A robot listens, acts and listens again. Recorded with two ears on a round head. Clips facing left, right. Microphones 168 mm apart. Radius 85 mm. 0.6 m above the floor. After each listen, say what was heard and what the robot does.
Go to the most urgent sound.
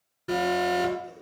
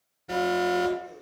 Turn 90° left.
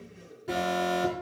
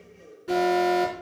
Drive 1.0 m forward.
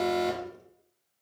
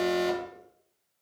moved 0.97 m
Drive 1.0 m forward.
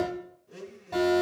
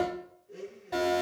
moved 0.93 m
Drive 1.0 m forward.
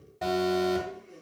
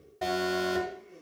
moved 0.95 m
Drive 1.0 m forward.
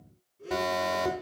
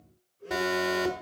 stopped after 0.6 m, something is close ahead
I am next to the alarm.